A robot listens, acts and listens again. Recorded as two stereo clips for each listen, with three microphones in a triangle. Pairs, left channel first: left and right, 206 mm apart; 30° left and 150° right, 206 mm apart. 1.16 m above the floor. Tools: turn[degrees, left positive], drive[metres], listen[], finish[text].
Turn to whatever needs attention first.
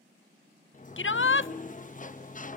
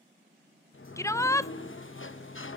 Thought: The shout: 105° left.
Action: turn[105]
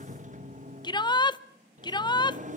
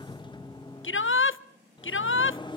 Thought: The shout is now 25° left.
Action: turn[25]
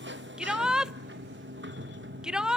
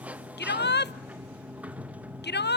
Action: finish[Facing the shout, under 1 m away.]